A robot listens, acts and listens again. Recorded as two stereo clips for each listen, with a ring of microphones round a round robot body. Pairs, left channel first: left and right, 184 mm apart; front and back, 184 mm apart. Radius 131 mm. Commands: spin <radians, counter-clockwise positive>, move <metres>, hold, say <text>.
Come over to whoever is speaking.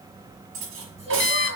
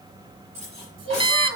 spin -2.71
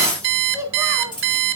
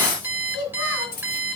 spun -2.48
spin -0.26
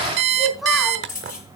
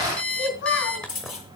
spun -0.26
move 1.0
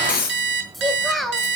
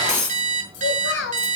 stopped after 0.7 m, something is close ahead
say Something is in my way. I am facing the child speaking but have not reached it.